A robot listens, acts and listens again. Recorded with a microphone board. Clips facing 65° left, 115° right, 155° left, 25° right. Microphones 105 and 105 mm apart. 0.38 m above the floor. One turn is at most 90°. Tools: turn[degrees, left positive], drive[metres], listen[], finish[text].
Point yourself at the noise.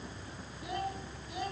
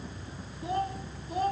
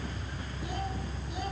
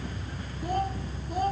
Thought: The child speaking: 65° right.
Action: turn[-65]
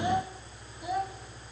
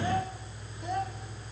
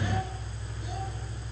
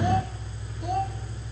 Thought: The child speaking is now 15° right.
Action: turn[-15]
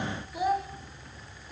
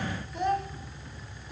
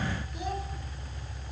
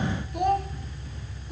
Thought: The child speaking is now 15° right.
Action: turn[-15]
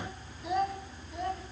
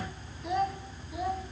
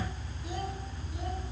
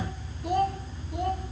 Thought: The child speaking is now 25° right.
Action: turn[-25]
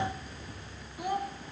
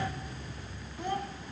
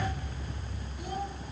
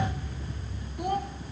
Thought: The child speaking is now 10° right.
Action: turn[-10]
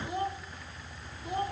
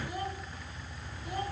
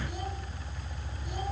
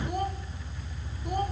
Action: finish[Found it: a child speaking, straight ahead.]